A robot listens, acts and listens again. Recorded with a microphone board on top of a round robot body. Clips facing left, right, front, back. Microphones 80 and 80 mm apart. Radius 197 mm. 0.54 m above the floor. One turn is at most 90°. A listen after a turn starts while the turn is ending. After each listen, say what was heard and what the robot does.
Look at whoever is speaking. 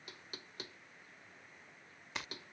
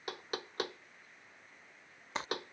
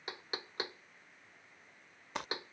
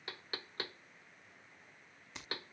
Keep listening.
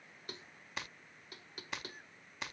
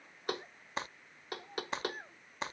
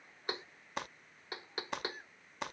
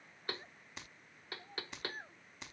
The child speaking: 125° right. Turn 90° right.
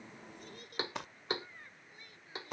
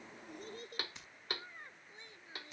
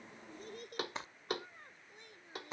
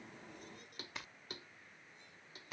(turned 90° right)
The child speaking is now 25° right. Turn 25° right.
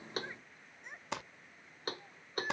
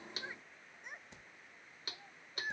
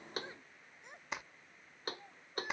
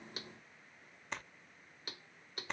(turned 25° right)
Facing the child speaking.